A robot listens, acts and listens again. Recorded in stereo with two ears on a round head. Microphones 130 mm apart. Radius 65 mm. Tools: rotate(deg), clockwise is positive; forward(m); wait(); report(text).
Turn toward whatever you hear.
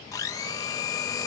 rotate(-25)
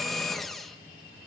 report("Found it: a blender, straight ahead, 1 to 2 m away.")